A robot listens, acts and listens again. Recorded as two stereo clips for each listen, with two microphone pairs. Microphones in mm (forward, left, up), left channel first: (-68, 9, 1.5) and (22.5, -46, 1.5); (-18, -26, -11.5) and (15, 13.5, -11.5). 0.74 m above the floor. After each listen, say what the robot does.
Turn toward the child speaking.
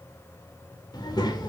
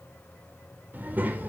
Turn 105° left.
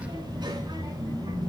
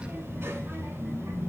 Turn 20° left.
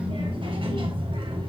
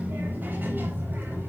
Found it: a child speaking, straight ahead, 2 to 4 m away.